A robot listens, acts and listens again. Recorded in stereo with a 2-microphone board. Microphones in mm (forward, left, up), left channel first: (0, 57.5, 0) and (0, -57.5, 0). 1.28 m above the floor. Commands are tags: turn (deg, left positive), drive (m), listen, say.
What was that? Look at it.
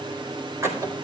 <turn deg="-25"/>
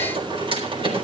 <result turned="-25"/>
<turn deg="-130"/>
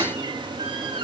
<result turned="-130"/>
<turn deg="-50"/>
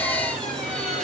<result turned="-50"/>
<say>Found it: a squeak, straight ahead, over 4 m away.</say>